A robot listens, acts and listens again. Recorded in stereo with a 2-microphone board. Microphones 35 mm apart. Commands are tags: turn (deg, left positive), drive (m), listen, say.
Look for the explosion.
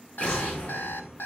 <turn deg="40"/>
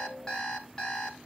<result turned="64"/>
<listen/>
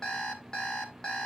<say>I heard an explosion, but can't make it out now. It was about 25° right or 75° left.</say>